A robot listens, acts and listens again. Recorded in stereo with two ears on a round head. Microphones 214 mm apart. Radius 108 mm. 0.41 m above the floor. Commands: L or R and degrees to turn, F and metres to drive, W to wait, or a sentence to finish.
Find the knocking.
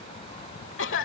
W
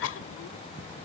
W
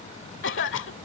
I can't make out knocking, only a cough.